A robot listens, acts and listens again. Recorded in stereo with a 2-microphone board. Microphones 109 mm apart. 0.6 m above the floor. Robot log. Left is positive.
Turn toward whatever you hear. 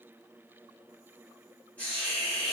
cmd yaw +30
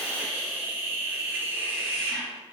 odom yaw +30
note: So it is at 20° right.
cmd yaw -20
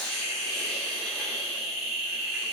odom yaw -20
end: Found it: a hiss, straight ahead, 1 to 2 m away.